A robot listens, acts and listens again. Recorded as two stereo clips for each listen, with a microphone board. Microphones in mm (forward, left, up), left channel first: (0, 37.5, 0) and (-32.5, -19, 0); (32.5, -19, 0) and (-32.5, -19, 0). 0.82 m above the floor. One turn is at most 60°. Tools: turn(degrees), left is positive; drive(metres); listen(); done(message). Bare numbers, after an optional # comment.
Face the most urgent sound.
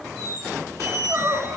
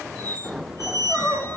# The crying: 60° right.
turn(-60)
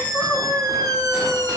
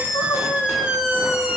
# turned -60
done("Facing the crying, 1 to 2 m away.")